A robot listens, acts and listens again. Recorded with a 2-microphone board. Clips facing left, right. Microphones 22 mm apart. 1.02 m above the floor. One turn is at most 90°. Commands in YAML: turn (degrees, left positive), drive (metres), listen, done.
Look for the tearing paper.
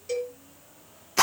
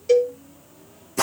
listen: true
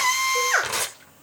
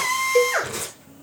turn: 75
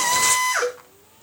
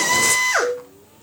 listen: true
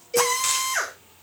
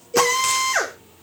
listen: true
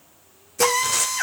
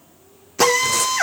done: "I heard tearing paper, but can't make it out now. It was about straight ahead or 30° left."